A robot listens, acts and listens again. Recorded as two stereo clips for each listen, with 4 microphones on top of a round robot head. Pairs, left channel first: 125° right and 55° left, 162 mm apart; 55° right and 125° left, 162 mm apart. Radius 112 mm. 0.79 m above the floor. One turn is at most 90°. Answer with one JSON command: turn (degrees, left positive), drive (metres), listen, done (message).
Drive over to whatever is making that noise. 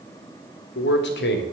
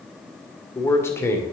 {"turn": -90}
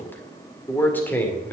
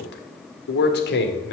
{"turn": -50}
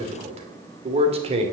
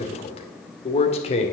{"drive": 1.0}
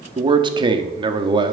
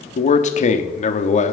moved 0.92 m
{"turn": -10}
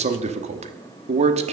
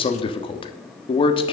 {"drive": 1.0}
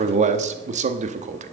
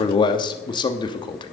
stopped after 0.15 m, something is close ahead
{"turn": 10}
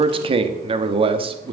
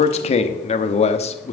{"done": "Arrived at the man speaking, straight ahead."}